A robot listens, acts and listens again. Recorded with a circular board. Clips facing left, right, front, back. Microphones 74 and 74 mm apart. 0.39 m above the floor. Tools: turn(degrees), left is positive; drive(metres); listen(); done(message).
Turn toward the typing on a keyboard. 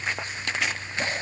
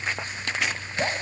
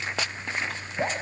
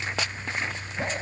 listen()
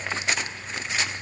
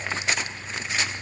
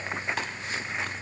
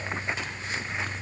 listen()
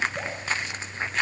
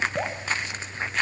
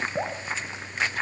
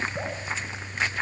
done("I can't make out typing on a keyboard to turn to.")